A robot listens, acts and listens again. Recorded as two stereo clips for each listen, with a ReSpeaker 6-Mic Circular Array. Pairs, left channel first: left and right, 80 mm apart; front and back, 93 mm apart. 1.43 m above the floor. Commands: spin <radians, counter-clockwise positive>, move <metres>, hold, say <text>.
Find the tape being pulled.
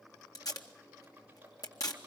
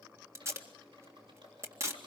spin 2.18
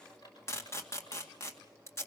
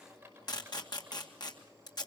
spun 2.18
spin 0.61
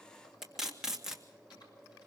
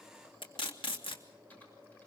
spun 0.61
say Found it: tape being pulled, straight ahead.